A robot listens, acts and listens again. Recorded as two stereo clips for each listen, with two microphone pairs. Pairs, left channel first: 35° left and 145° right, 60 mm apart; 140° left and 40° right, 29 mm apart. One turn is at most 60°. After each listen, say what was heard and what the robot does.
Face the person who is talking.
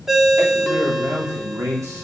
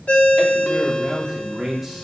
The man speaking: 130° right. Turn 60° right.
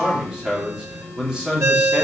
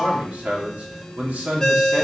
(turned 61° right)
The man speaking is now 65° right. Turn 60° right.
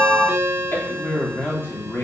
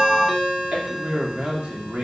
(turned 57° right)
The man speaking is now 10° right. Turn 10° right.
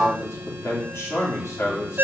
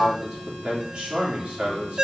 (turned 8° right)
Found it: a man speaking, straight ahead, 2 to 4 m away.